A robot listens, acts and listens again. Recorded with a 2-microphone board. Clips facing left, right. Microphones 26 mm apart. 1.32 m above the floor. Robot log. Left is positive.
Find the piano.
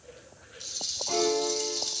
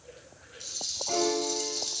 note: The piano: about 25° right or 155° right.
cmd yaw -25
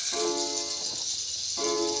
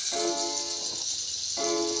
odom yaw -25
note: So it is at 125° right.
cmd yaw -125
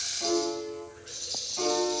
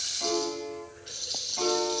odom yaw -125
note: The piano is now 10° right.
cmd yaw -10
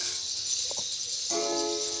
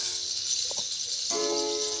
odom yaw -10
end: Found it: a piano, straight ahead, 2 to 4 m away.